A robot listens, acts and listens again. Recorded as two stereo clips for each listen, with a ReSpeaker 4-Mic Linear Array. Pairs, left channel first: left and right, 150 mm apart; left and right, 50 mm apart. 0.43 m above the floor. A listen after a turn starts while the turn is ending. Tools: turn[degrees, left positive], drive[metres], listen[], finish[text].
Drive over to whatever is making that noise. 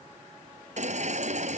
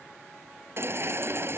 Thought: The baby crying: about 50° right or 130° right.
Action: turn[-50]
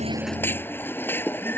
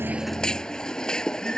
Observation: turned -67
Thought: So it is at 15° left.
Action: turn[15]
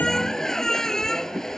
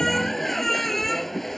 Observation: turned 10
Action: drive[1.0]
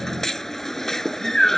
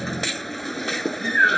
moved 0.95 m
Action: drive[1.0]
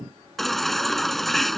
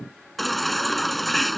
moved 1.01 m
Action: drive[1.0]
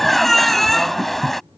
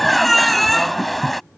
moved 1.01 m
Action: drive[1.0]
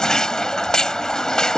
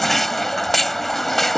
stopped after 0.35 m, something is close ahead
Action: finish[I am next to the baby crying.]